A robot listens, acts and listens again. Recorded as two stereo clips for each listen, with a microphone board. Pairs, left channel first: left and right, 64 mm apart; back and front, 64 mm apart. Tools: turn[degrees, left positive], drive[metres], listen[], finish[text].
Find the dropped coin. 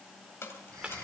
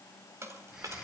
Thought: The dropped coin: 40° left.
Action: turn[40]
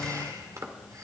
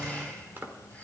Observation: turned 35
Action: finish[Facing where the dropped coin came from. I can't hear it now.]